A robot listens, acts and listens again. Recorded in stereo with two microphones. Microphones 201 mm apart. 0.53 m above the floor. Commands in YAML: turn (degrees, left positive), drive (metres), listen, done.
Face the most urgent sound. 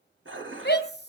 turn: 60
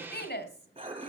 turn: 60
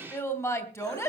turn: 15
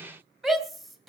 done: "Found it: a shout, straight ahead, 2 to 4 m away."